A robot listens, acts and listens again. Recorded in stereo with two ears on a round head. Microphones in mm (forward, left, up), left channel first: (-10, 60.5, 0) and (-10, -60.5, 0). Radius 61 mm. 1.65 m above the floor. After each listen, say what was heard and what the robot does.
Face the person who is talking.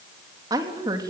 The woman speaking: about 25° right or 155° right. Turn 25° right.
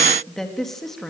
Found it: a woman speaking, straight ahead.